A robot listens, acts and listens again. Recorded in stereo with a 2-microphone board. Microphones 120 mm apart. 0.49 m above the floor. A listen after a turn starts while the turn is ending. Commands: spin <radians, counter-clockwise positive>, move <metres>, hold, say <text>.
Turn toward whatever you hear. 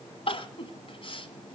spin 0.96
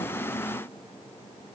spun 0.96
hold
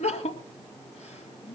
spin 1.22
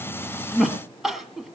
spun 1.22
say Found it: crying, straight ahead, 2 to 4 m away.